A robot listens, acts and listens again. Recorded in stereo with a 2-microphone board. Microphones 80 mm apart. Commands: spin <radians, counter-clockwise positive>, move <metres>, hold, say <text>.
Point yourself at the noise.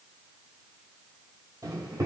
spin -0.79
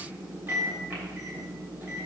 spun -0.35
spin -0.44
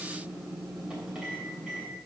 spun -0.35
spin -0.17
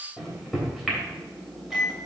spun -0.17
say Facing the microwave, 2 to 4 m away.